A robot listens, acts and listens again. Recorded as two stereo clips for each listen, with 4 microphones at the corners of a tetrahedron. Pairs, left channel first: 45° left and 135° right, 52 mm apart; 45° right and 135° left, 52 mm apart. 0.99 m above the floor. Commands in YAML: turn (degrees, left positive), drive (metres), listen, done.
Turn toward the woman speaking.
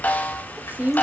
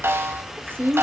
turn: 170
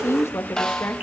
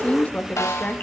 turn: 10
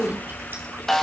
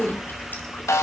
listen: true
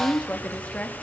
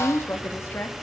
turn: -15
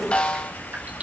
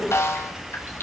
listen: true
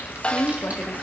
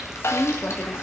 done: "Facing the woman speaking."